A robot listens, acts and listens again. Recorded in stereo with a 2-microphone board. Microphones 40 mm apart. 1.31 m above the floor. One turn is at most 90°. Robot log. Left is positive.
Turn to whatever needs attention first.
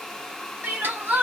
note: The crying: about 60° right or 120° right.
cmd yaw -60
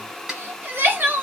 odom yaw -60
note: So it is at 60° right.
cmd yaw -60
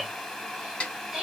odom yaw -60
note: The crying is now 10° right.
cmd yaw -10
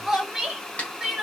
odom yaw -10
end: Found it: crying, straight ahead.